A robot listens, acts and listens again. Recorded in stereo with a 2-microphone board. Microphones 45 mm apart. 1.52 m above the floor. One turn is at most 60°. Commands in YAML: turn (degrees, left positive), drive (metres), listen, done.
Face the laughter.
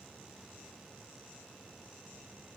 listen: true
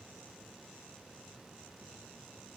listen: true
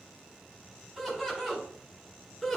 turn: -30
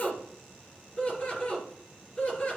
turn: 25
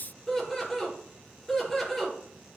done: "Found it: laughter, straight ahead, over 4 m away."